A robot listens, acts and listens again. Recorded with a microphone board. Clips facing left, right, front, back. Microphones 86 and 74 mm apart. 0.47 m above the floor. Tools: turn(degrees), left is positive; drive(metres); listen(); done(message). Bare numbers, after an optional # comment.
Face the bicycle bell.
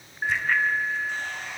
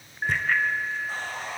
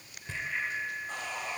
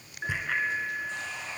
# The bicycle bell: 175° left.
turn(175)
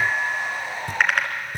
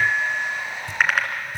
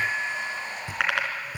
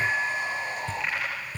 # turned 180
done("Found it: a bicycle bell, straight ahead.")